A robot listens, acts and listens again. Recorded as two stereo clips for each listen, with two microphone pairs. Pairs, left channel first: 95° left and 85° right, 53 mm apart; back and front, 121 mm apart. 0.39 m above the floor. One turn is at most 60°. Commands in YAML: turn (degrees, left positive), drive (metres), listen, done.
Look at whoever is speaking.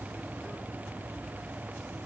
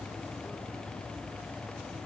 listen: true
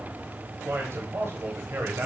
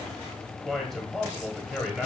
turn: -60
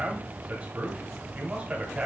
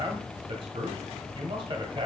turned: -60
turn: -30
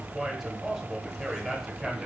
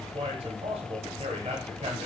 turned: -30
done: "Facing the man speaking, 1 to 2 m away."